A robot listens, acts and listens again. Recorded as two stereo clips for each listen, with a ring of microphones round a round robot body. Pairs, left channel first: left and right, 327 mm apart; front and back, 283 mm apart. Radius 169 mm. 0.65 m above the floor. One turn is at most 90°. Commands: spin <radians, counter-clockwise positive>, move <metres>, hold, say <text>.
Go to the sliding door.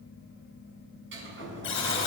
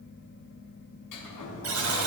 spin -0.61
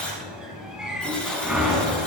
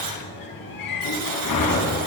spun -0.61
move 1.0
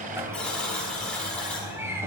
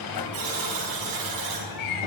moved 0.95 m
move 1.0
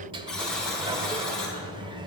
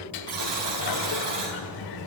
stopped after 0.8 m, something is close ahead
spin -0.26
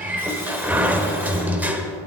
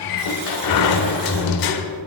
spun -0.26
say I am next to the sliding door.